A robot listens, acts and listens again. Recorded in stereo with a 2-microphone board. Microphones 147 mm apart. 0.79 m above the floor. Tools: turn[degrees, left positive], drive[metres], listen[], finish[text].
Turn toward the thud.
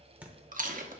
Action: turn[-30]
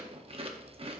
Action: listen[]
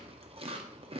Action: finish[I heard a thud, but can't make it out now. It was about 20° left or 140° right.]